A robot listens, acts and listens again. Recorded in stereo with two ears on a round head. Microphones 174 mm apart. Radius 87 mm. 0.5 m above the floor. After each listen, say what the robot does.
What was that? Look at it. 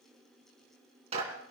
Turn 30° right.
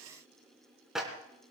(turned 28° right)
Found it: a clap, straight ahead, 2 to 4 m away.